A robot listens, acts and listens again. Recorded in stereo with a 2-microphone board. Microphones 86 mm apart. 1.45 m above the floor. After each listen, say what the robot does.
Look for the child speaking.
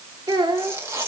Turn 60° right.
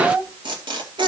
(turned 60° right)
Turn 65° right.
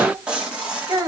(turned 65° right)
Turn 40° right.
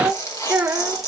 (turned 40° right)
Turn 15° right.
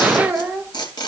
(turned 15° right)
Found it: a child speaking, straight ahead, 1 to 2 m away.